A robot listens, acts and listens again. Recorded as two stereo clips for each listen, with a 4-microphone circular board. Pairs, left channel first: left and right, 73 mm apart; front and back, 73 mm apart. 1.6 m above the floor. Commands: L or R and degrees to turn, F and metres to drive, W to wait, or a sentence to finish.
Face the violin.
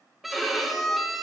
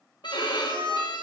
Found it: a violin, straight ahead, 1 to 2 m away.